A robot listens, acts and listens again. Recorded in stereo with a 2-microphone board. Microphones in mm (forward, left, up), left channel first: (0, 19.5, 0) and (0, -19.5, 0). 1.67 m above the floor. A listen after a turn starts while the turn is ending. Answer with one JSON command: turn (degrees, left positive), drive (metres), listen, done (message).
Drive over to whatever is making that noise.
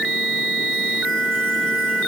{"listen": true}
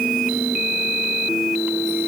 {"listen": true}
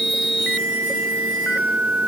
{"done": "I can't make out anything to turn to."}